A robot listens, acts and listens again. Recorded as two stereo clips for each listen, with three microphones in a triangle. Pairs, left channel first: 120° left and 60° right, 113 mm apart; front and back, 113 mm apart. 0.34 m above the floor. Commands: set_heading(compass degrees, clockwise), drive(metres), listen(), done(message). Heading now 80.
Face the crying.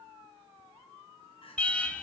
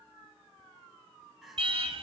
set_heading(350)
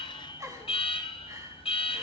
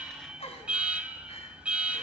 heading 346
done("Facing the crying.")